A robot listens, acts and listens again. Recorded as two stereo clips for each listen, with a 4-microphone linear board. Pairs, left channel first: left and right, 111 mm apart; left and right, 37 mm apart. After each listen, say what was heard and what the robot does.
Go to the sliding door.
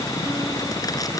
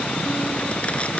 Keep listening.
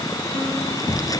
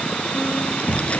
The sliding door: about 35° left or 145° left. Turn 35° left.
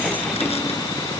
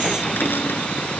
Keep listening.
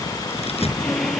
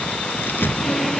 Drive 1.0 m forward.
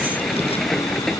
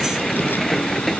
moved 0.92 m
Drive 1.0 m forward.
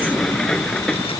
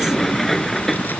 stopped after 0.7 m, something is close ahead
Blocked. The sliding door is further on, straight ahead.